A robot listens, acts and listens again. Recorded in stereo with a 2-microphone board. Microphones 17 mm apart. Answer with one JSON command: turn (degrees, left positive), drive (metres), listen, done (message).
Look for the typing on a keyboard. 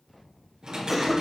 {"turn": -55}
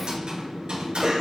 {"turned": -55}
{"turn": -70}
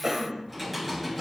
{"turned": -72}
{"done": "Facing the typing on a keyboard."}